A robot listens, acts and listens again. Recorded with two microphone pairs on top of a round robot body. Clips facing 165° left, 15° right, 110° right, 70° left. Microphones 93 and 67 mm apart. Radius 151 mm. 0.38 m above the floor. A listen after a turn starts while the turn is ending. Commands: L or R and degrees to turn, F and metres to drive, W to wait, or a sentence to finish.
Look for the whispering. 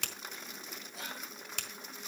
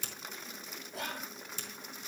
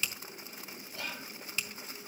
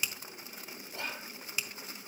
L15
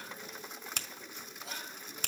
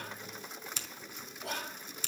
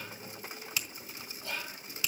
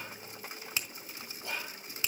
Facing the whispering, 1 to 2 m away.